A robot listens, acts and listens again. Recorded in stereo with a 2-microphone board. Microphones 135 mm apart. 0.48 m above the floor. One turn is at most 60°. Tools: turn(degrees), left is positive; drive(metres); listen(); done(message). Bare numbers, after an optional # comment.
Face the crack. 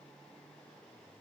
listen()
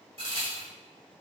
# The crack: about 45° right or 135° right.
turn(-45)
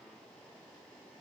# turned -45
listen()
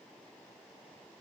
done("I heard a crack, but can't make it out now. It was about straight ahead or 90° right.")